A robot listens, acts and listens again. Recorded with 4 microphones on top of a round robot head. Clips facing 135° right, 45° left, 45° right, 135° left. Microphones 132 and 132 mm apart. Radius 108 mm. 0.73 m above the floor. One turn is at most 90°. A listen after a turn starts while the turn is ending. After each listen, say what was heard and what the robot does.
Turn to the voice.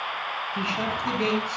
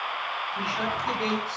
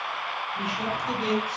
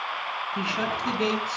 The man speaking: 150° left. Turn 90° left.
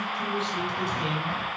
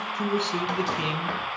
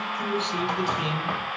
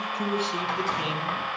The man speaking is now 45° left. Turn 45° left.
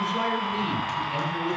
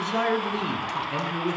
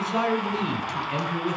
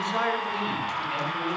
Found it: a man speaking, straight ahead.